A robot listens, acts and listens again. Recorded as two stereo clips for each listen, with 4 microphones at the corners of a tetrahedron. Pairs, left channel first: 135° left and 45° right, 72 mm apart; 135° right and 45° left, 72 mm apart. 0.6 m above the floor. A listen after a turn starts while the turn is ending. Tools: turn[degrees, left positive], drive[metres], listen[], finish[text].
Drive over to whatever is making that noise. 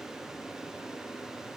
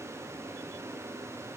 Action: listen[]
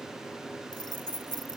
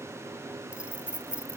Thought: The keys jangling: 120° left.
Action: turn[120]
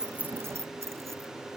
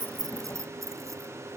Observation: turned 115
Action: listen[]
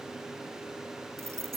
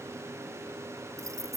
Action: drive[1.0]
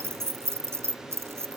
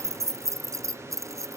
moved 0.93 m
Action: drive[1.0]
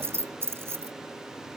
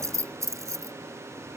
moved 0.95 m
Action: drive[1.0]
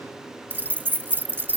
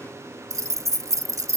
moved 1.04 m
Thought: The keys jangling is now 10° left.
Action: turn[10]
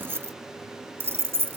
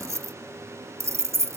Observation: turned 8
Action: drive[1.0]
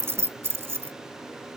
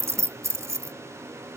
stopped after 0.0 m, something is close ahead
Action: finish[I am next to the keys jangling.]